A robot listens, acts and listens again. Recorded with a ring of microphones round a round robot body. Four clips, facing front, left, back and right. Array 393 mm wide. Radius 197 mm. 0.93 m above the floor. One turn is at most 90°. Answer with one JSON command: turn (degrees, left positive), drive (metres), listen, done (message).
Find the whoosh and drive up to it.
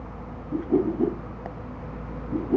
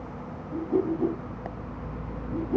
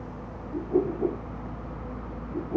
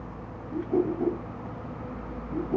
{"drive": 1.0}
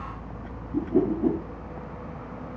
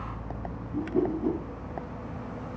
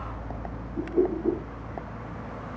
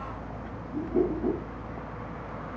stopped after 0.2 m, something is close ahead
{"turn": -10}
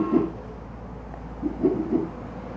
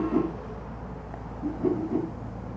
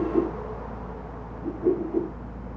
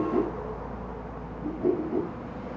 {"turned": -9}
{"done": "Blocked. The whoosh is further on, straight ahead."}